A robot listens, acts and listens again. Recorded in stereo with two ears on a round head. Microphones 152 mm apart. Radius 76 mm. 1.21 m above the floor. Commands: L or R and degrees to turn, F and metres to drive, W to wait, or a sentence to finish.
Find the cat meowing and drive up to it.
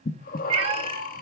R35
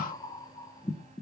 W
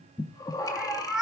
F1.0
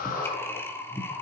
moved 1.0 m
W
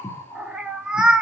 F1.0
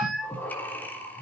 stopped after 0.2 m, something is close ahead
I am next to the cat meowing.